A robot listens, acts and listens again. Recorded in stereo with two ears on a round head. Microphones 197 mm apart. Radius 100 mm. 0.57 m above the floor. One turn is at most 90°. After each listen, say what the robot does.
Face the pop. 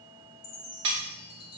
Keep listening.
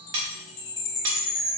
Keep listening.
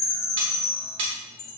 I can't make out a pop to turn to.